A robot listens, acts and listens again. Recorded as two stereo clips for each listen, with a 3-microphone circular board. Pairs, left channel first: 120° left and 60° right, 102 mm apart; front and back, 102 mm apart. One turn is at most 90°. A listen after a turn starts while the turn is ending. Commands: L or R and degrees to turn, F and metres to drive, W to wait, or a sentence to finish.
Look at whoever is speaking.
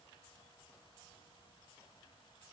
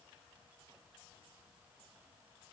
W
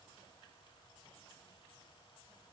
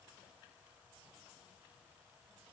W
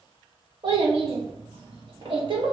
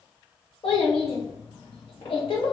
R25
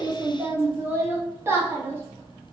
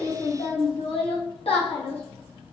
Facing the child speaking.